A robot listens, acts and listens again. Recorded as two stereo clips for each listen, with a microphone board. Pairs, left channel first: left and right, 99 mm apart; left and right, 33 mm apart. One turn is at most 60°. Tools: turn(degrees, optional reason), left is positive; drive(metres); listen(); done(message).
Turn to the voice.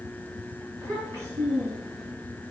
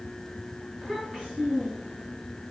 turn(degrees=-35, reason="The child speaking: about 35° right or 145° right.")
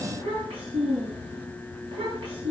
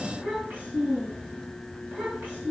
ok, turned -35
turn(degrees=-60, reason="So it is at 110° right.")
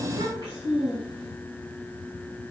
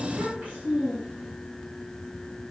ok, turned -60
turn(degrees=-35, reason="The child speaking is now 35° right.")
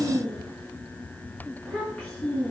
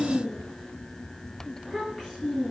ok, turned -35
done("Facing the child speaking, over 4 m away.")